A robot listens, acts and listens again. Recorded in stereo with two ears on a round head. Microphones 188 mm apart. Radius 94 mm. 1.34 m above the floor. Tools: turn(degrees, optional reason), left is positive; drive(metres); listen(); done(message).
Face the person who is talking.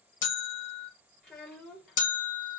turn(degrees=30)
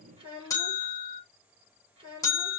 turn(degrees=-25, reason="So it is at 25° right.")
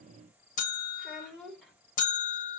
done("Found it: a child speaking, straight ahead.")